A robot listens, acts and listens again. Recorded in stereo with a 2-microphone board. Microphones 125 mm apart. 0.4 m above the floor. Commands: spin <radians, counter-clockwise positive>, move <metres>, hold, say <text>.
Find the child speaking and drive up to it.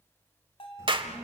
spin -0.35
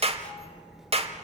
move 1.0
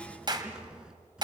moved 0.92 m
move 1.0
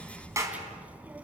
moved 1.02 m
spin -0.17
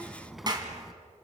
move 1.0
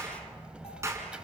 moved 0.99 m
spin -0.17
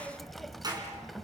move 1.0
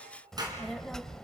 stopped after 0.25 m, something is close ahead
say Arrived at the child speaking, straight ahead.